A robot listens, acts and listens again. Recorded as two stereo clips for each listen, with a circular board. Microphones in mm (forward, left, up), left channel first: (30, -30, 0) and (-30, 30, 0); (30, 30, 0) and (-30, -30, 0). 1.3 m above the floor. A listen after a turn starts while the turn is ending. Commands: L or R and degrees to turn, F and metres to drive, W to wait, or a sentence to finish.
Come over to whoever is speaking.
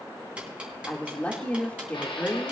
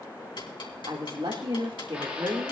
R120
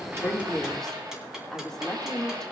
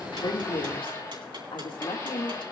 L40
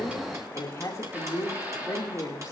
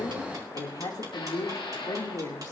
F1.0
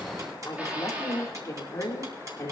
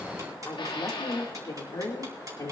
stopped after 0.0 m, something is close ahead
Blocked. The woman speaking is further on, straight ahead.